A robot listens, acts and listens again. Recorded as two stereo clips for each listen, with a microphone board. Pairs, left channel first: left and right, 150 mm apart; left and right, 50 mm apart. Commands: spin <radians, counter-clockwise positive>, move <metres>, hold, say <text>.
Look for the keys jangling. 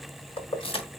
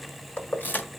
spin 0.70
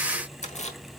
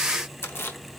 spin 0.87
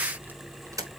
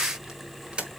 spin -0.44
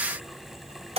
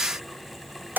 spin -0.70
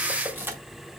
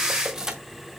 spin -0.26
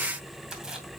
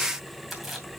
say Found it: keys jangling, straight ahead, 2 to 4 m away.